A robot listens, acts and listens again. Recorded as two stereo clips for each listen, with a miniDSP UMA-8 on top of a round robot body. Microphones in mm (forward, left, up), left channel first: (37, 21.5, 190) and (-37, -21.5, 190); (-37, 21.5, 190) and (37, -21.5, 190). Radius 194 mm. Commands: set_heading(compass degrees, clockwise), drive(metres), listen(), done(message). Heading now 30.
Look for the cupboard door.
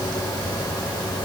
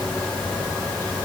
listen()
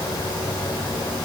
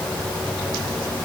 listen()
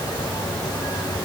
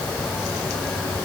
done("I can't make out a cupboard door.")